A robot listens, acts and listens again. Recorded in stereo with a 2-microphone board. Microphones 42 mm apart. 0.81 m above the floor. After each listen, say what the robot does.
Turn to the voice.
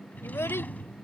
Turn 90° left.
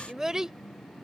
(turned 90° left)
Turn 10° right.
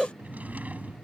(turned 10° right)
Facing the child speaking.